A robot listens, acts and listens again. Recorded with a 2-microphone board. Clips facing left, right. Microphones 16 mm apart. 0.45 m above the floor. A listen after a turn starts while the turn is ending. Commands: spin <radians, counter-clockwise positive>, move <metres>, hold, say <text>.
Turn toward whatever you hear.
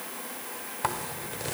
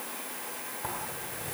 spin 0.96
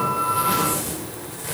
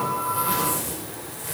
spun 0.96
spin 0.35
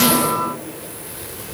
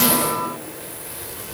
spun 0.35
say Found it: a zipper, straight ahead.